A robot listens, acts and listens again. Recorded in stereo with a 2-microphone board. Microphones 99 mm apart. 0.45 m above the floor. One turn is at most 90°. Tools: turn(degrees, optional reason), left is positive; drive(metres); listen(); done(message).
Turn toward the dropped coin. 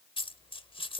turn(degrees=55, reason="The dropped coin: about 55° left or 125° left.")
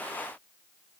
listen()
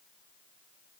done("I heard a dropped coin, but can't make it out now. It was about straight ahead or 70° left.")